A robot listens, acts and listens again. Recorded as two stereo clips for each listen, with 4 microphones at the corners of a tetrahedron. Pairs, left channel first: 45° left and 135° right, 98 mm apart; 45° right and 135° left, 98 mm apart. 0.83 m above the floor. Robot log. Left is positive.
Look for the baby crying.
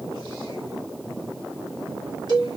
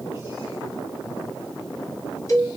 cmd idle
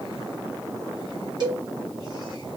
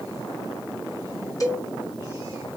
cmd idle
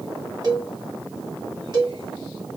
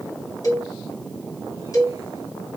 end: I can't make out a baby crying, only a cowbell.